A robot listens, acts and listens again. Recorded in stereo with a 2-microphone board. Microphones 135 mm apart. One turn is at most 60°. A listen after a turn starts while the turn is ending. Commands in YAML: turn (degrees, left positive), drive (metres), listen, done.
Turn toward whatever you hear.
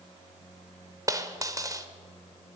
turn: -25
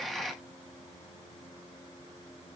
listen: true
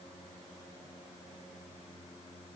done: "I heard a dropped coin, but can't make it out now. It was about straight ahead or 130° right."